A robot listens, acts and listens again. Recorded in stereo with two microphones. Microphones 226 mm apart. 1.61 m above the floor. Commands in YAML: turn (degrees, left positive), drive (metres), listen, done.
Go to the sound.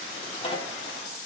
turn: 25
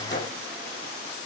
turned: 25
turn: 130
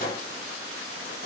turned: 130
turn: 40
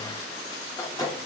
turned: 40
turn: 15
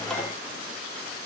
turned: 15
drive: 1.0
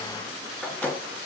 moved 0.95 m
drive: 1.0
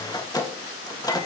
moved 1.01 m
turn: 15
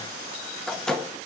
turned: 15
drive: 1.0
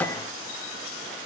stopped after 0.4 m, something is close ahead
turn: 10
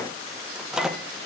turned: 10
done: "I am next to the microwave."